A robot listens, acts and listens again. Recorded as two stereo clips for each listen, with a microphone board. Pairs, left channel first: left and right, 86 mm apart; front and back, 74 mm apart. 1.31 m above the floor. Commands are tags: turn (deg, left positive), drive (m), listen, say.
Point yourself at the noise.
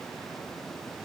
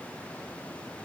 <listen/>
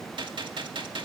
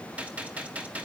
<turn deg="-110"/>
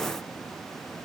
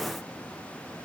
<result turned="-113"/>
<say>Facing where the gunshot came from. I can't hear it now.</say>